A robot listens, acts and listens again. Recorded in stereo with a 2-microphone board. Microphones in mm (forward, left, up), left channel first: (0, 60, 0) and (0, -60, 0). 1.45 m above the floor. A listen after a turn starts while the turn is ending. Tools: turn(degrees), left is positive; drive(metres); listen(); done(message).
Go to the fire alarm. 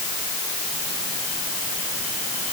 listen()
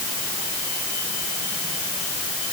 listen()
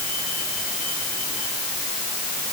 done("I can't make out a fire alarm.")